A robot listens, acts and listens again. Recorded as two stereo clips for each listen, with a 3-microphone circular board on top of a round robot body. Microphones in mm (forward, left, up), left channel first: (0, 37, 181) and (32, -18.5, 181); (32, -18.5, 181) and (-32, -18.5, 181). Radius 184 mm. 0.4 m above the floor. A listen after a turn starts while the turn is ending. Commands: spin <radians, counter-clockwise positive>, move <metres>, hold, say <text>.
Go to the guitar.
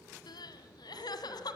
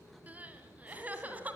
hold
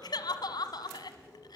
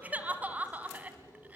hold
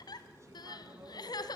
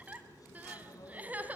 say I can't make out a guitar, only crying.